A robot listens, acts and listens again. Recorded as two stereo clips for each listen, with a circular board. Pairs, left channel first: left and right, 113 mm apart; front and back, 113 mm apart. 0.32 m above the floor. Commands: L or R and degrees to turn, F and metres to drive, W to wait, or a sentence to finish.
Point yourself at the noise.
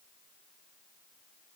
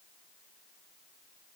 W
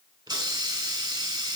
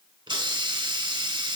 R140
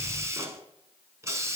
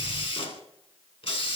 R30
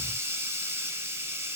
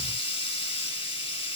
R25
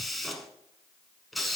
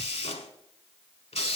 Facing the hiss, under 1 m away.